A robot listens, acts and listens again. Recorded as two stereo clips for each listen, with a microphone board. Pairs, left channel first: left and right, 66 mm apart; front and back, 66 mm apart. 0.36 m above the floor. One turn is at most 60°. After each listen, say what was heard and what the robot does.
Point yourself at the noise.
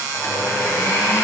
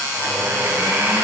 The blender: 130° left. Turn 60° left.
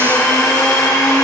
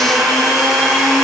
The blender is now 85° left. Turn 60° left.
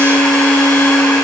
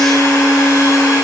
The blender is now 20° left. Turn 20° left.
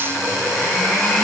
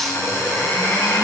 Found it: a blender, straight ahead, 2 to 4 m away.